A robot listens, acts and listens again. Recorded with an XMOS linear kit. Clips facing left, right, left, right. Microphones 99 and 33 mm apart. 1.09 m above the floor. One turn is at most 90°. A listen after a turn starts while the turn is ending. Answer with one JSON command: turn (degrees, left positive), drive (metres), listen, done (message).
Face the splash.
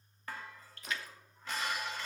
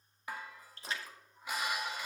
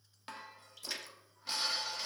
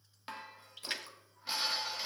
{"turn": -30}
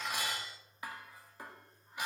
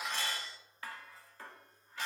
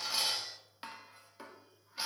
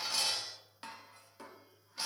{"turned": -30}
{"listen": true}
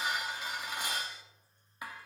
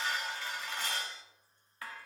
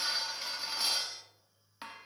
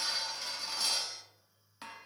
{"done": "I heard a splash, but can't make it out now. It was about straight ahead or 120° right."}